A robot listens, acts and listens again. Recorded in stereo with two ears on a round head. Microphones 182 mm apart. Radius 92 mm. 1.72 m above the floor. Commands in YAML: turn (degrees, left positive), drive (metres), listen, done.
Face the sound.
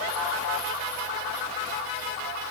listen: true
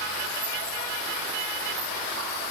listen: true
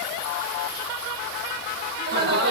turn: -50
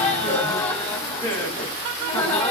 turn: 10
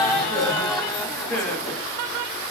done: "Facing the laughter, 2 to 4 m away."